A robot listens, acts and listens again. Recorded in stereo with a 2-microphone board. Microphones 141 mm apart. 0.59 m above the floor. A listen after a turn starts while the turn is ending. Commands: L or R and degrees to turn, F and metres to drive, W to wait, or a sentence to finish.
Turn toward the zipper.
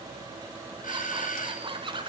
R35
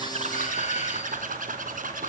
R105
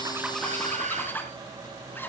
L15
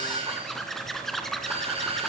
Facing the zipper.